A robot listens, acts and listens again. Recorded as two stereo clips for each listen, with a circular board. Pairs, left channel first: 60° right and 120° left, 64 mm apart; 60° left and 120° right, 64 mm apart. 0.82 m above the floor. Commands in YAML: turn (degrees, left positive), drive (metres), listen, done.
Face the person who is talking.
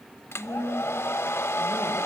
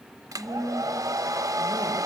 turn: 95
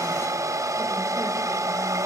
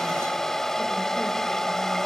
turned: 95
listen: true
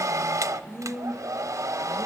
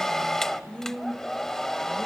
turn: -15
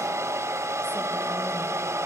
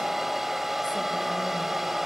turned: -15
listen: true
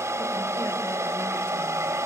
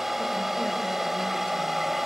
listen: true
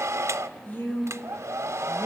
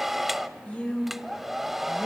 done: "Facing the woman speaking, 2 to 4 m away."